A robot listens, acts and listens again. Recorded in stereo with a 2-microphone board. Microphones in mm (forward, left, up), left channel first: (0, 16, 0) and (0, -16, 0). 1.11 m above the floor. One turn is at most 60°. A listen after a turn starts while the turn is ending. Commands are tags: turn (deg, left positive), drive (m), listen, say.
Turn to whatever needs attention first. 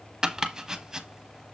<listen/>
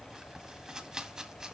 <listen/>
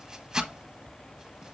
<say>I can't make out anything urgent, only chopping.</say>